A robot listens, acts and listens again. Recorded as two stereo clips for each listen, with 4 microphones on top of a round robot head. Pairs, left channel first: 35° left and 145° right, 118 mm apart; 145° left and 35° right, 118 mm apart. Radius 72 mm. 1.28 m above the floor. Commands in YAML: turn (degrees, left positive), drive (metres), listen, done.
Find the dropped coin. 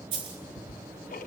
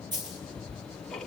turn: -95
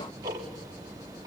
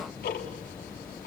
done: "I heard a dropped coin from this way, but can't make it out now."